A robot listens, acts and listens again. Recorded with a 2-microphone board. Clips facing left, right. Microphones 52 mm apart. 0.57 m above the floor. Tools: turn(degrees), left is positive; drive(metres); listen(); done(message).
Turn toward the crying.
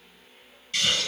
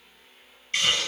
listen()
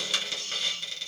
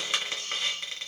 listen()
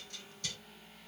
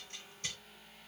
done("I can't make out crying to turn to.")